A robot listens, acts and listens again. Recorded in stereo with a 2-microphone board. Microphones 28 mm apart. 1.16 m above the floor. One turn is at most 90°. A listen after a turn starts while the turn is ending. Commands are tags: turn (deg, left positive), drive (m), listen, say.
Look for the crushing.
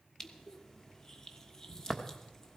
<turn deg="20"/>
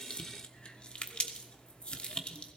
<turn deg="90"/>
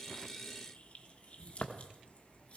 <turn deg="45"/>
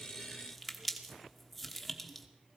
<say>Found it: crushing, straight ahead.</say>